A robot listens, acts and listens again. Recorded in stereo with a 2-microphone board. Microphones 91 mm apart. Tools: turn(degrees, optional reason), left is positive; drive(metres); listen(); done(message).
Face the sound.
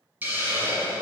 turn(degrees=-20, reason="The hiss: about 20° right or 160° right.")
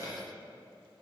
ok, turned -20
turn(degrees=-140, reason="So it is at 140° right.")
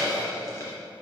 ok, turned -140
turn(degrees=35, reason="The hiss is now 35° left.")
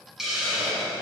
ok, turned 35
done("Facing the hiss, 1 to 2 m away.")